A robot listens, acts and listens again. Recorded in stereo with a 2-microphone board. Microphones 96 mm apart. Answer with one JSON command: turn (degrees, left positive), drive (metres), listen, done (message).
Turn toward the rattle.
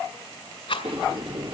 {"turn": 65}
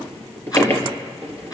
{"listen": true}
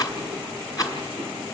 {"turn": 45}
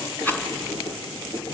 {"turn": 20}
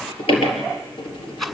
{"done": "Found it: a rattle, straight ahead, 2 to 4 m away."}